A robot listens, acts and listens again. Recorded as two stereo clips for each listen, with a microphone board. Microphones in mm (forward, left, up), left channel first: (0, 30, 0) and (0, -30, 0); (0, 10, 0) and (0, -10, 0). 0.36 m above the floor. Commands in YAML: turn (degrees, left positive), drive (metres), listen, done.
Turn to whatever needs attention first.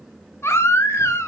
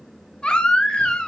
turn: 45
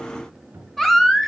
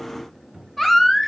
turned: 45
done: "Found it: a baby crying, straight ahead."